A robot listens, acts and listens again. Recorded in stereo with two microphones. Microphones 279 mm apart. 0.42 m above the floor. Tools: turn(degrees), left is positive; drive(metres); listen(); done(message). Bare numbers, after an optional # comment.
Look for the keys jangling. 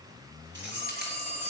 # The keys jangling: about 35° right or 145° right.
turn(-35)
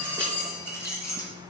# So it is at 10° left.
turn(10)
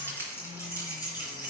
# The keys jangling is now 15° left.
turn(15)
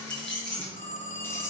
done("Found it: keys jangling, straight ahead, over 4 m away.")